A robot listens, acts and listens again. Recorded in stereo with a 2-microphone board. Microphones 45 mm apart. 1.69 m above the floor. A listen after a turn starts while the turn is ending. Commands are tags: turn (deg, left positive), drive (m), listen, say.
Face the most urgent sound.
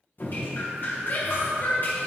<turn deg="45"/>
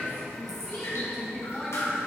<say>Facing the shout, 1 to 2 m away.</say>